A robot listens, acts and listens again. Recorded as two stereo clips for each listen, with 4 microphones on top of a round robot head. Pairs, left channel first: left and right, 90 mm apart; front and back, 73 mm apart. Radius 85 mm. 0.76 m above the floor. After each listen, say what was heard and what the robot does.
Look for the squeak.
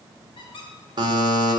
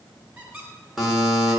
The squeak: 115° left. Turn 115° left.
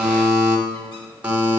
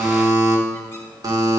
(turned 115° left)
Keep listening.
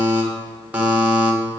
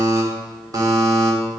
Keep listening.
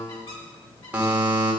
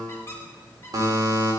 The squeak is now 50° left. Turn 50° left.
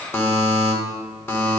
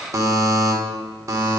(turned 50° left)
Keep listening.
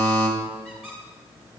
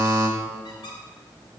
Facing the squeak, 2 to 4 m away.